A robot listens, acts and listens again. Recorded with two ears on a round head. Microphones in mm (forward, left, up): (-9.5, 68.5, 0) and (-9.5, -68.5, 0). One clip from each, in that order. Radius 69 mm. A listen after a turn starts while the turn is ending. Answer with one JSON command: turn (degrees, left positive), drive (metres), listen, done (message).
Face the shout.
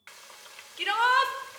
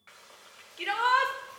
{"turn": 25}
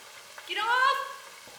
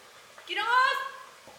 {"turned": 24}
{"done": "Found it: a shout, straight ahead, 1 to 2 m away."}